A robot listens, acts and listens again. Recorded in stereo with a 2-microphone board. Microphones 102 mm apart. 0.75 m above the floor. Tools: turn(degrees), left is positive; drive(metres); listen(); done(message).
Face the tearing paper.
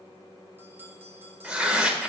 turn(degrees=-30)
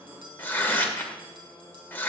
turn(degrees=20)
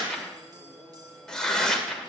done("Facing the tearing paper, 1 to 2 m away.")